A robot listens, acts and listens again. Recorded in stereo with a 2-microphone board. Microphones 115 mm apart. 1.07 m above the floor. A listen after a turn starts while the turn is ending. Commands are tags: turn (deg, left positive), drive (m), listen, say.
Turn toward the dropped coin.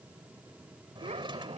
<listen/>
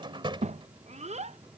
<listen/>
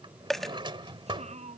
<turn deg="30"/>
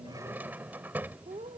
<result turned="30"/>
<listen/>
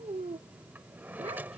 <say>I heard a dropped coin, but can't make it out now. It was about 25° right or 145° left.</say>